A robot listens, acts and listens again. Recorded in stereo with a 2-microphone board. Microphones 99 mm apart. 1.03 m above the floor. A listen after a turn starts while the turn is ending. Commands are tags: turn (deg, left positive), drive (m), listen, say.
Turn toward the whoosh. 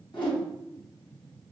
<turn deg="55"/>
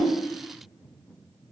<listen/>
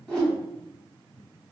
<turn deg="10"/>
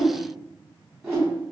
<say>Found it: a whoosh, straight ahead, 1 to 2 m away.</say>